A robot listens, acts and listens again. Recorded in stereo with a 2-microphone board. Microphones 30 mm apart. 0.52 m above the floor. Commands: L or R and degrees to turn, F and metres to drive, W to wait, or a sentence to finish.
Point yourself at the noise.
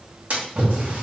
R55
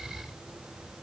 W
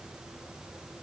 I heard a splash, but can't make it out now. It was about straight ahead or 70° right.